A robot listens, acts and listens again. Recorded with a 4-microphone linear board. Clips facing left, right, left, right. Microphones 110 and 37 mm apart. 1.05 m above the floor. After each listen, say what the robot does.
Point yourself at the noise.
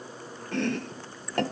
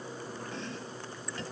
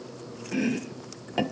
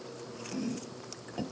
Turn 75° left.
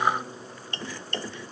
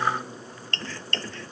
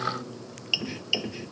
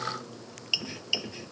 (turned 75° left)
Turn 15° left.
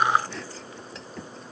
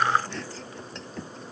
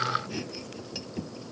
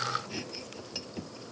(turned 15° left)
Found it: chopping, straight ahead.